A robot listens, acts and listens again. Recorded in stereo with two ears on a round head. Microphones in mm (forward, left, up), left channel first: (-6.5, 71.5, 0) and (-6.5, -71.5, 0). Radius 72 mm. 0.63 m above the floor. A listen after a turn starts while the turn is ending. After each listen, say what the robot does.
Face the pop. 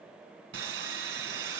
Keep listening.
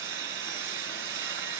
Keep listening.
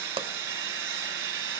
Turn 35° right.
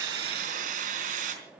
Keep listening.
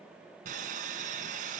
I heard a pop, but can't make it out now. It was about straight ahead or 110° right.